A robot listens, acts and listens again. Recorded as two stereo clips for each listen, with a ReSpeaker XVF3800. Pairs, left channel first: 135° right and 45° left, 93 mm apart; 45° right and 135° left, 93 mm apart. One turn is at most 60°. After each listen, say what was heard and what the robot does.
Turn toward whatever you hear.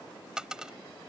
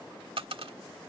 The dropped coin: 125° left. Turn 60° left.
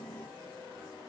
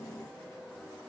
Nothing new. It was at 65° left. Turn 60° left.
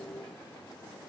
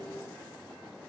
Facing where the dropped coin came from. I can't hear it now.